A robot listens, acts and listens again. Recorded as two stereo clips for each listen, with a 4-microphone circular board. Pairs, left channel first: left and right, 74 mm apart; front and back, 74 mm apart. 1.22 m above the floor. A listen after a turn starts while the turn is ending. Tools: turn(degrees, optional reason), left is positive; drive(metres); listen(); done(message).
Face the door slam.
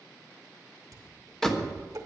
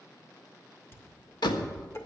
done("Facing the door slam.")